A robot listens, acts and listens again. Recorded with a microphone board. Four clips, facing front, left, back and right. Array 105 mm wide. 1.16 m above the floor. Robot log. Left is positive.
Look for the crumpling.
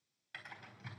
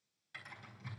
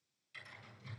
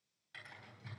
cmd idle
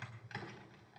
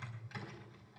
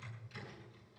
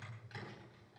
cmd idle
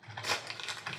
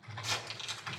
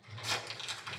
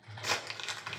note: The crumpling: 55° right.
cmd yaw -55
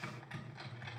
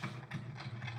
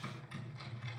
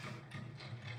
cmd idle
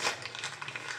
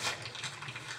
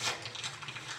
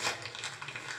note: The crumpling is now 15° right.
cmd yaw -15
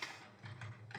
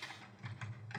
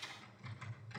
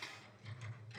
end: Found it: crumpling, straight ahead, 1 to 2 m away.